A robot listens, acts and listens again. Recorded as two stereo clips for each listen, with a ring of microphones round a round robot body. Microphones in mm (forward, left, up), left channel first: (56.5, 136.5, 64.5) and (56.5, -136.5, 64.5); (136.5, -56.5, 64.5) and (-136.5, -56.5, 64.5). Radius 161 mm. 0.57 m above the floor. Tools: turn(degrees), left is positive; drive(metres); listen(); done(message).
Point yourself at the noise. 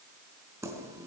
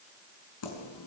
turn(degrees=-10)
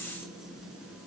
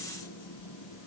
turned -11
done("Facing the keys jangling, over 4 m away.")